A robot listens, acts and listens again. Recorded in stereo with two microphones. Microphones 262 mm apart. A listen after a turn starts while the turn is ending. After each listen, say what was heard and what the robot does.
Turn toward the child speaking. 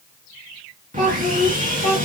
The child speaking: about 15° left or 165° left. Turn 15° left.
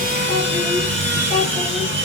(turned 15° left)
Keep listening.
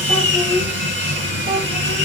Turn 30° left.
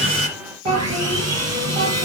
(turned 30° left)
So it is at 25° right. Turn 25° right.
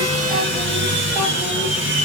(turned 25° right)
Keep listening.
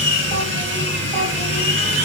Keep listening.
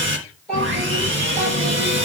Found it: a child speaking, straight ahead, over 4 m away.